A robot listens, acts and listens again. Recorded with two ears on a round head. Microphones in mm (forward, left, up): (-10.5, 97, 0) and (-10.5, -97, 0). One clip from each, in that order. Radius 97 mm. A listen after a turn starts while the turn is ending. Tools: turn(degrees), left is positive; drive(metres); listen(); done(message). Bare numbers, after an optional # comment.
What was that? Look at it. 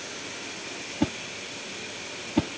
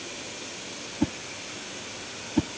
# The whoosh: about 30° left or 150° left.
turn(30)
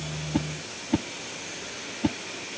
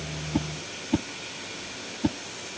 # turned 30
done("Found it: a whoosh, straight ahead.")